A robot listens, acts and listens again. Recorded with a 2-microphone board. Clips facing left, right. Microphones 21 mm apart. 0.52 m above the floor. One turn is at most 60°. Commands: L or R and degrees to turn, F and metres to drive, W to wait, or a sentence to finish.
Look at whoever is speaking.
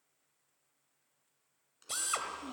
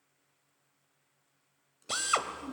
L60
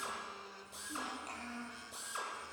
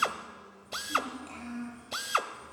Found it: a child speaking, straight ahead.